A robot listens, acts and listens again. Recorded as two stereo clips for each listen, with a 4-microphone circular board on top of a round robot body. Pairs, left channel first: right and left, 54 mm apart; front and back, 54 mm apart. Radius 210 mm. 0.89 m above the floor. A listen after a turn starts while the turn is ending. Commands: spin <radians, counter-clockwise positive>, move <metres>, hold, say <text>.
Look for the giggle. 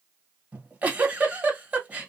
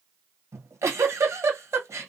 spin 2.71
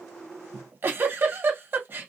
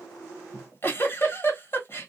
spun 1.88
spin 0.79
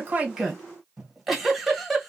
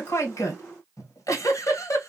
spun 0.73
say Found it: a giggle, straight ahead, 1 to 2 m away.